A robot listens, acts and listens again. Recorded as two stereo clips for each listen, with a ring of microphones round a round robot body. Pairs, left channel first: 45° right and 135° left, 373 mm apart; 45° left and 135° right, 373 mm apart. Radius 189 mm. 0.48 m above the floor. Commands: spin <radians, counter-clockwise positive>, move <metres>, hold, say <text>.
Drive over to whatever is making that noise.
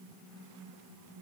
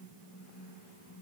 hold
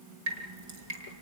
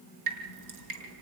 spin 3.14
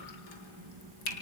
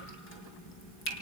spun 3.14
spin -0.26
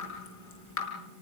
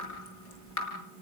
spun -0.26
move 1.0
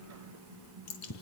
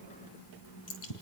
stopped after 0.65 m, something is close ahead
say Something is in my way. I am facing the dripping but have not reached it.